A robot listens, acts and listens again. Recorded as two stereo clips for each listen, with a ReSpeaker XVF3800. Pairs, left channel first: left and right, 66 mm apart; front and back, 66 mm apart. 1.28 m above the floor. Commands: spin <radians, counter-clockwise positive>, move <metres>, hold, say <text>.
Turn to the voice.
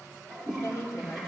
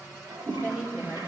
spin 2.27
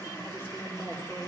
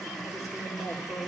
spin 0.52
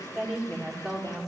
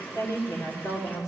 say Facing the woman speaking.